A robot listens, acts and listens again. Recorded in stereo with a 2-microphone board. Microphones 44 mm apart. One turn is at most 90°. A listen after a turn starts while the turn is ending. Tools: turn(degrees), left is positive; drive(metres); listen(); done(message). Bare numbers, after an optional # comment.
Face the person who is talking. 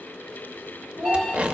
turn(-90)
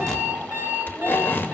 listen()
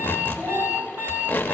# The child speaking is now 15° right.
turn(-15)
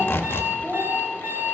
# The child speaking is now 15° right.
turn(-15)
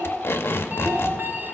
listen()
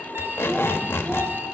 listen()
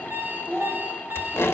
# The child speaking is now 15° right.
turn(-15)
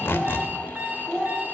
done("Found it: a child speaking, straight ahead.")